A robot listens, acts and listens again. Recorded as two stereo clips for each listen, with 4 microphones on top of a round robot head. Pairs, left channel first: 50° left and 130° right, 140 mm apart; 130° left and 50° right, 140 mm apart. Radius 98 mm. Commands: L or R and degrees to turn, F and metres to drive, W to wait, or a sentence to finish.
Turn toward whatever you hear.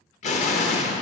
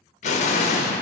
L90
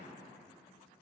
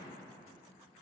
I heard an explosion from this way, but can't make it out now.